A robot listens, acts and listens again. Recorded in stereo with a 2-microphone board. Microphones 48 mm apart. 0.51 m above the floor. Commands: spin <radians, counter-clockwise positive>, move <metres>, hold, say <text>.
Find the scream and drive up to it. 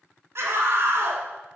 spin -1.05
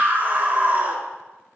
spin -0.70
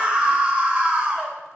spin -0.44
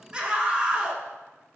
spin -0.35
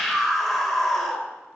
move 1.0
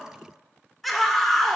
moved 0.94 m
move 1.0
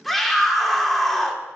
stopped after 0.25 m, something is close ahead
spin 0.17
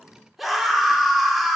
say I am next to the scream.